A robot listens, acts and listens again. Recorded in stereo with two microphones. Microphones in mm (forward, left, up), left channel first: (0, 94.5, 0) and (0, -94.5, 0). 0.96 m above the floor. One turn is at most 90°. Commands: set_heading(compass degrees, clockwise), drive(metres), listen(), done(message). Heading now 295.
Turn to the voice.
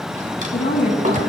set_heading(240)
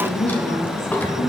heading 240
set_heading(175)
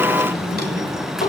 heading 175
set_heading(160)
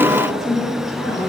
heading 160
done("Found it: a woman speaking, straight ahead.")